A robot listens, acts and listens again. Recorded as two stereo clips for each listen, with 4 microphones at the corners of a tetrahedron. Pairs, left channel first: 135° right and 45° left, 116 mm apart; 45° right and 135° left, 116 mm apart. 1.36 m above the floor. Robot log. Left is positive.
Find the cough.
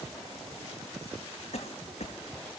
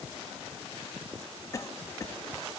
note: The cough: 110° right.
cmd yaw -110
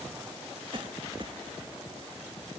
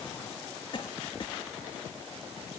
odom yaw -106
end: Facing the cough.